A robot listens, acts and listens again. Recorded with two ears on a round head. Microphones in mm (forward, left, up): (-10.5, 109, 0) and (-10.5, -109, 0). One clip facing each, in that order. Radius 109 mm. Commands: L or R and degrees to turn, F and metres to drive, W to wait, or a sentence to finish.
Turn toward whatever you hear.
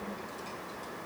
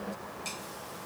W
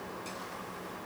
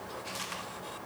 W
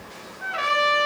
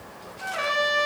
L30
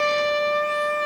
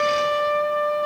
L140
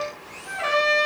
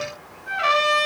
R20
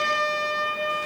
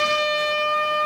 R10
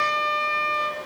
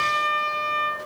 L10
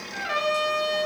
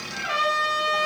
Found it: a trumpet, straight ahead.